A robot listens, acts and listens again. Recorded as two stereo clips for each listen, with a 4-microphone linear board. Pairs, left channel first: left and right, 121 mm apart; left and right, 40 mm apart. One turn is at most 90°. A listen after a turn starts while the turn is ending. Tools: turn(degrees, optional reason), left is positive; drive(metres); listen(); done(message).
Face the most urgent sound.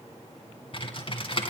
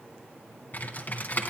listen()
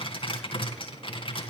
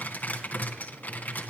listen()
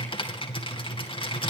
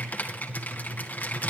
done("I can't make out anything urgent, only typing on a keyboard.")